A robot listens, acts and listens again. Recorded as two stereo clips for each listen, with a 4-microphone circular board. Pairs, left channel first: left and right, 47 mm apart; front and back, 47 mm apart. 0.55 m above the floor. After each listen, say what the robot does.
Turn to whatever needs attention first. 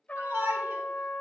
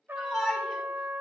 Turn 95° right.
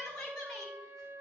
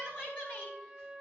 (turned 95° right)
Turn 20° left.
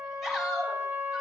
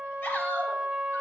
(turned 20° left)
Facing the shout.